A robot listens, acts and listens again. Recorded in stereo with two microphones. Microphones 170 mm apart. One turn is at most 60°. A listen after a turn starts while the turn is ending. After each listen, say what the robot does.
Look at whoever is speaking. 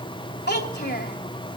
Turn 60° left.
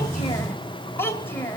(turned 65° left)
Turn 15° left.
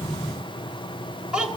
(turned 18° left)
Found it: a child speaking, straight ahead, 2 to 4 m away.